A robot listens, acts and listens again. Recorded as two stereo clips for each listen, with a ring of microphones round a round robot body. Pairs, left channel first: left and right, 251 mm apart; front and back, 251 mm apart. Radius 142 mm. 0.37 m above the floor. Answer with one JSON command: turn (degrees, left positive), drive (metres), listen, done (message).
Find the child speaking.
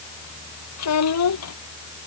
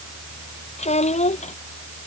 {"turn": 65}
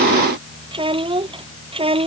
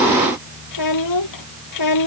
{"turn": -20}
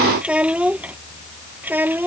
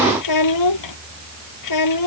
{"done": "Found it: a child speaking, straight ahead."}